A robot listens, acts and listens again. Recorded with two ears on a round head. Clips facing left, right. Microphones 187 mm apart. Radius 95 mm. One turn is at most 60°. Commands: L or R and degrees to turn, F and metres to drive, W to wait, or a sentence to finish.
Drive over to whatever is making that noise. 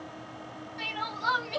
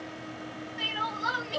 R15
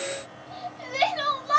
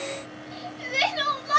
R60
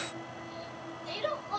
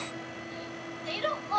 R60
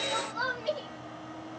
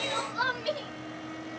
R30
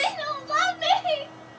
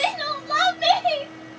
R15
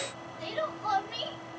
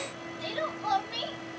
F1.0
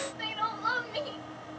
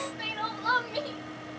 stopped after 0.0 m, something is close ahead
Something is in my way. I am facing the crying but have not reached it.